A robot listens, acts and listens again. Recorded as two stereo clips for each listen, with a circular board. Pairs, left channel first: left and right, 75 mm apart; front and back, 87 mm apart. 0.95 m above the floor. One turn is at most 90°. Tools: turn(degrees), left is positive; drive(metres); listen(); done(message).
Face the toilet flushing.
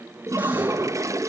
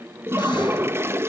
turn(degrees=-90)
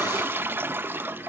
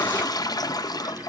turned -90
turn(degrees=-35)
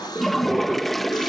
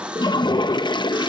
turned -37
done("Facing the toilet flushing, under 1 m away.")